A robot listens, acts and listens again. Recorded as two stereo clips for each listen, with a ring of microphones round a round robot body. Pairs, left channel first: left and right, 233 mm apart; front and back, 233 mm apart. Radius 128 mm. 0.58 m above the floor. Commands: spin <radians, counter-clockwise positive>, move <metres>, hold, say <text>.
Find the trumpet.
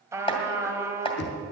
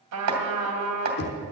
spin -2.97
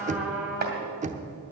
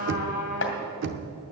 say Found it: a trumpet, straight ahead.